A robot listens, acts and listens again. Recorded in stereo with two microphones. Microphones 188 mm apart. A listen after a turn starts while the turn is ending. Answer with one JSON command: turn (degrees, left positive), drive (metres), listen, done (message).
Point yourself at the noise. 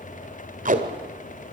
{"turn": -45}
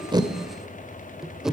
{"done": "Found it: tape being pulled, straight ahead."}